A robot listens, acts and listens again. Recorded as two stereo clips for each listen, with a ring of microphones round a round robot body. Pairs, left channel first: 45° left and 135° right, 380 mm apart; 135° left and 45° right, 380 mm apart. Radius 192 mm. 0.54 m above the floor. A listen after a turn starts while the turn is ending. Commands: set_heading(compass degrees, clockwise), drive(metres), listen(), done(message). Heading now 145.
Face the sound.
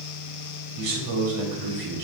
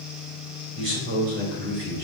set_heading(255)
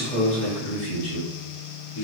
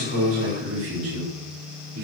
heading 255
done("Found it: a man speaking, straight ahead.")